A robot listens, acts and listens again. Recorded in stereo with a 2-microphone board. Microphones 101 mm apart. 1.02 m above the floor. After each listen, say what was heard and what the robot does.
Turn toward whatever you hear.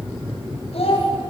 Turn 90° left.
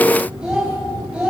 So it is at 10° right. Turn 10° right.
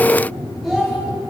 Found it: a child speaking, straight ahead, over 4 m away.